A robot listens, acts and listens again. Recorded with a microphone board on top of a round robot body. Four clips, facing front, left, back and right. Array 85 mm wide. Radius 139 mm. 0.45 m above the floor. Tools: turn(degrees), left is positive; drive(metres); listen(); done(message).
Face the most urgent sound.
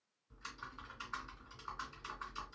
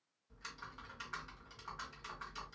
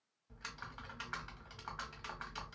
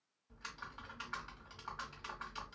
listen()
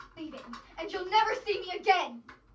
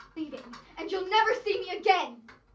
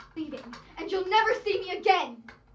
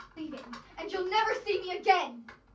turn(degrees=150)
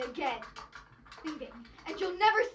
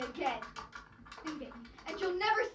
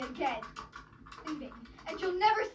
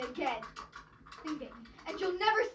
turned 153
done("Found it: a shout, straight ahead.")